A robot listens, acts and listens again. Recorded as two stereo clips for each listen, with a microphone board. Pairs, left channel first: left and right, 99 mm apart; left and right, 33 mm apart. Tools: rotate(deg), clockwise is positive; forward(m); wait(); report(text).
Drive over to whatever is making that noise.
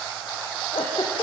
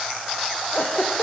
rotate(-90)
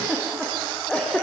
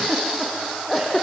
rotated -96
rotate(-10)
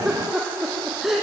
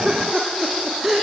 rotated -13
forward(1.0)
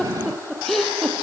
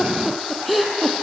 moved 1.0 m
forward(1.0)
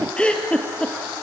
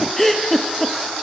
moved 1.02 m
rotate(-10)
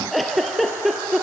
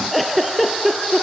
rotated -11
forward(1.0)
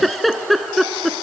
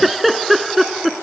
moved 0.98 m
forward(1.0)
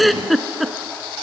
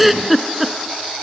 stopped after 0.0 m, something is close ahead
report("Arrived at the giggle, straight ahead.")